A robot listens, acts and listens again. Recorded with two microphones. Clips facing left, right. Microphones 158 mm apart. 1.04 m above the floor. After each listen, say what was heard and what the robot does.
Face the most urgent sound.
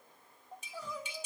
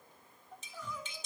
The crying: about 35° left or 145° left. Turn 35° left.
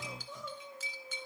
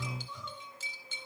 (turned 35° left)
So it is at 105° left. Turn 105° left.
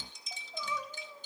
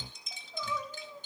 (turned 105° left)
The crying is now 10° left. Turn 10° left.
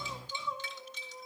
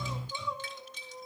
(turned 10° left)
Found it: crying, straight ahead, 2 to 4 m away.